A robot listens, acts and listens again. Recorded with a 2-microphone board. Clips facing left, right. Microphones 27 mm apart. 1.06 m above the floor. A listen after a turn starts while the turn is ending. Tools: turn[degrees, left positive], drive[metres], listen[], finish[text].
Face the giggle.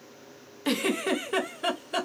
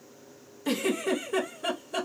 Thought: The giggle: about 60° left or 120° left.
Action: turn[60]
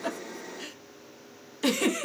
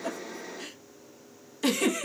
Action: finish[Found it: a giggle, straight ahead.]